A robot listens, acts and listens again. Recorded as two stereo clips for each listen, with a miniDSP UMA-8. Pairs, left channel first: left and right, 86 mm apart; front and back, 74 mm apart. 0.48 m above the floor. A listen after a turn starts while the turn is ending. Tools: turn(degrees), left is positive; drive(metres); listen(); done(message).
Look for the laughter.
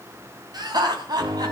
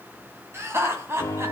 turn(degrees=-125)
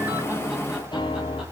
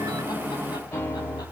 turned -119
listen()
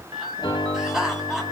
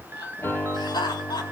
done("Facing the laughter, 2 to 4 m away.")